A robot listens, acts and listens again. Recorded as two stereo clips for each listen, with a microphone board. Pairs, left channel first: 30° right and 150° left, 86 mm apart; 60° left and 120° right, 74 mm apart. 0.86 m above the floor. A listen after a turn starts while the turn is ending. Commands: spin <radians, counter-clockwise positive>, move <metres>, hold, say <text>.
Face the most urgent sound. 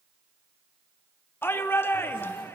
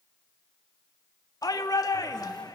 spin 0.52
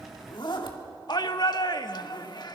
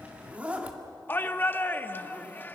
say Found it: a shout, straight ahead.